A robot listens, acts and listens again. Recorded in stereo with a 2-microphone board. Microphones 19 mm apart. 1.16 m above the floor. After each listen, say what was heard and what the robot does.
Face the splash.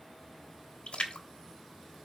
The splash: about 75° left or 105° left. Turn 75° left.
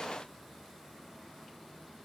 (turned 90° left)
Keep listening.
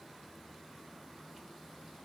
I heard a splash, but can't make it out now. It was about 15° right or 15° left.